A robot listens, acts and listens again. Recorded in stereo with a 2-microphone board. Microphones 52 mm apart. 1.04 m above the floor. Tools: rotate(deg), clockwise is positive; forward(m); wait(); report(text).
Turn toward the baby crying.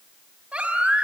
rotate(20)
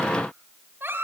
rotate(135)
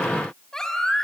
rotate(-10)
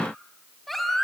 report("Found it: a baby crying, straight ahead.")